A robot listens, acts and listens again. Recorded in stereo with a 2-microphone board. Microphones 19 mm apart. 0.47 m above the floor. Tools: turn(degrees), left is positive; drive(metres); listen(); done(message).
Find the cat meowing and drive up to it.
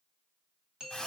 listen()
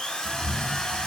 turn(degrees=-90)
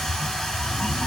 turn(degrees=15)
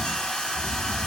listen()
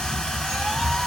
drive(metres=1.0)
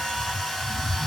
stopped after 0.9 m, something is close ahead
done("Arrived at the cat meowing, straight ahead.")